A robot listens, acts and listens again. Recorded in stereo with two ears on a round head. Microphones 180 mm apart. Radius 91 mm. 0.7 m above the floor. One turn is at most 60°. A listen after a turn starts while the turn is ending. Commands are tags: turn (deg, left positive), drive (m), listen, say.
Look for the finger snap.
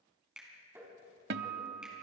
<turn deg="-30"/>
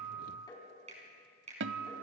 <turn deg="-60"/>
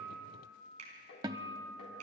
<turn deg="-60"/>
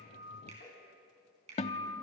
<turn deg="-30"/>
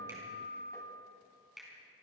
<say>Found it: a finger snap, straight ahead, over 4 m away.</say>